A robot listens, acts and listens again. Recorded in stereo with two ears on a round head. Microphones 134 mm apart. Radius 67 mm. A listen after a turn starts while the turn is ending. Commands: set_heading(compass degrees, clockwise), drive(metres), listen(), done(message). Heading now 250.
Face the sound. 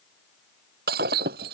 set_heading(320)
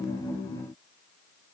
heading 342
listen()
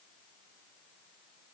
done("I heard breaking glass, but can't make it out now. It was about 15° right or 20° left.")